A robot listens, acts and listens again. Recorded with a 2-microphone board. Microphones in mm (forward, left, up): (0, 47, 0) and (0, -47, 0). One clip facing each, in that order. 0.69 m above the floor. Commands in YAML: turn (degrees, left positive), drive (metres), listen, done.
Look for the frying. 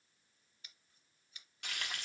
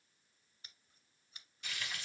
turn: 65
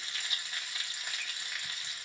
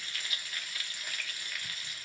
turn: 25
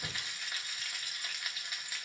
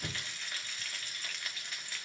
turn: 10
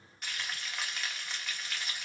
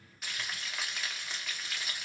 done: "Facing the frying."